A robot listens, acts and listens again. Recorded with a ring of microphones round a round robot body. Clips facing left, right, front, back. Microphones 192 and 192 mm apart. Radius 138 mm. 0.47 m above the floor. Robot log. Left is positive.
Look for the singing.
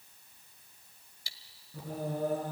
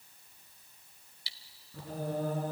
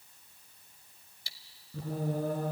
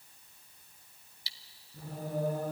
note: The singing: 15° left.
cmd yaw +15
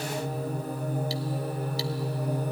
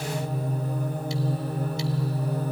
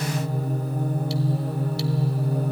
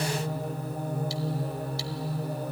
note: The singing is now 15° left.
cmd yaw +15
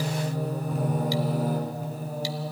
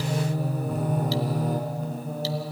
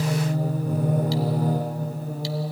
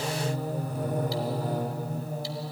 end: Found it: singing, straight ahead.